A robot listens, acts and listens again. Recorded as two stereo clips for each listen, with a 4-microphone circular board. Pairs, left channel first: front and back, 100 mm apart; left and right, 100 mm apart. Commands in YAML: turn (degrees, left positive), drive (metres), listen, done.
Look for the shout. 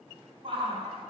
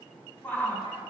turn: 165
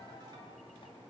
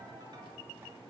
listen: true
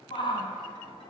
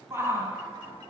turn: -25
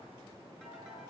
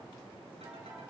listen: true
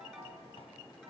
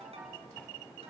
listen: true
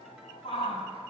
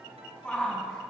turn: 15
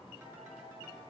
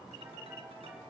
listen: true
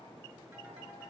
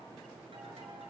listen: true
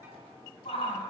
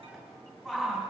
done: "Facing the shout."